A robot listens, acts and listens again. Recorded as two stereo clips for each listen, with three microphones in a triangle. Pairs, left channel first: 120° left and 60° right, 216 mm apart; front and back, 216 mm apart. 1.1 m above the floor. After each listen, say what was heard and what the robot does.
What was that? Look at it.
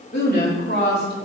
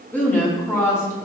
The woman speaking: 80° left. Turn 80° left.
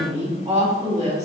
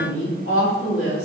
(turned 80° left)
Facing the woman speaking.